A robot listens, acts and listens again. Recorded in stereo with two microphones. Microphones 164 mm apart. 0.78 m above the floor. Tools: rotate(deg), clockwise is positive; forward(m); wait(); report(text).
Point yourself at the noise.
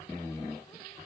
wait()
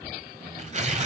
rotate(45)
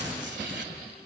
rotate(95)
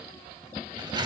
rotate(25)
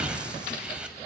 report("Found it: tearing paper, straight ahead, 2 to 4 m away.")